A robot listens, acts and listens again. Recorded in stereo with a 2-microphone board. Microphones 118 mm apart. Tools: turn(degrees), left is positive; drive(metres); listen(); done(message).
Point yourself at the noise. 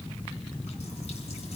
listen()
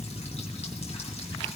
listen()
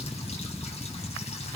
done("I can't make out anything.")